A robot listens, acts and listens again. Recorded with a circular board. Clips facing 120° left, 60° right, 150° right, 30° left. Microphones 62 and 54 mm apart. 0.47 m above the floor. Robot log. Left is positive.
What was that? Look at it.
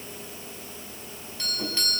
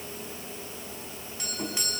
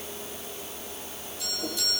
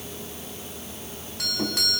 note: The doorbell: 15° left.
cmd yaw +15
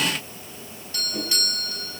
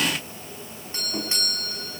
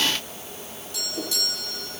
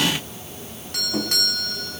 end: Found it: a doorbell, straight ahead, over 4 m away.